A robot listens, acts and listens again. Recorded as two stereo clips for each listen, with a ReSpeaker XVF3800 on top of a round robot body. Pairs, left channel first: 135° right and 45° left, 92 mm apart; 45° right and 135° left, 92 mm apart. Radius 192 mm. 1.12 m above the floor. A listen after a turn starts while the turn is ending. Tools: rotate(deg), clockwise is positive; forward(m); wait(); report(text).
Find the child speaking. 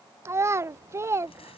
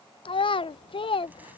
rotate(15)
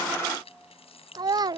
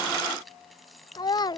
report("Found it: a child speaking, straight ahead.")